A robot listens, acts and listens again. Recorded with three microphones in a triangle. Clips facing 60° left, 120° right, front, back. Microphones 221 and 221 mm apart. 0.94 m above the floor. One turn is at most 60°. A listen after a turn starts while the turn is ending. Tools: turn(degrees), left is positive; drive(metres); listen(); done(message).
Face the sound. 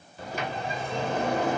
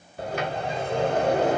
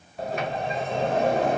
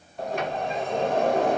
turn(degrees=-60)
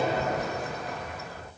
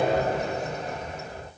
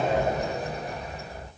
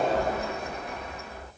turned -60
turn(degrees=-55)
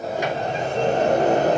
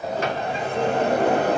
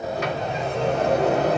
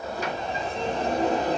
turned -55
turn(degrees=10)
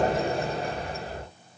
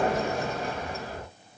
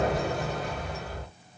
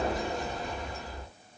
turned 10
done("Found it: a sliding door, straight ahead, 1 to 2 m away.")